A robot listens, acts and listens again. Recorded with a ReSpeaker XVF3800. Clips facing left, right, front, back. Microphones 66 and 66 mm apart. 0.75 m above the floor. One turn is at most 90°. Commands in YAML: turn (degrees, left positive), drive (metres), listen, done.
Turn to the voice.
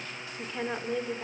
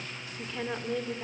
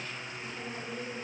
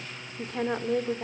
turn: 90
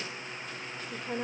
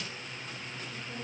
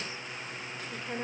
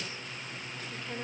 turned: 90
turn: 70
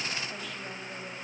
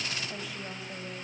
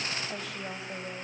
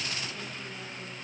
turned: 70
listen: true
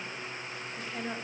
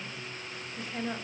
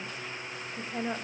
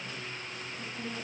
done: "Found it: a woman speaking, straight ahead."